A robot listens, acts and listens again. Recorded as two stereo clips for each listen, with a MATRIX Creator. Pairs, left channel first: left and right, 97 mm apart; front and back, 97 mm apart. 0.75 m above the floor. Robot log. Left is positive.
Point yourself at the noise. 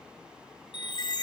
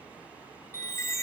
note: The chime: 55° left.
cmd yaw +55
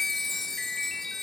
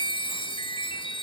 end: Facing the chime.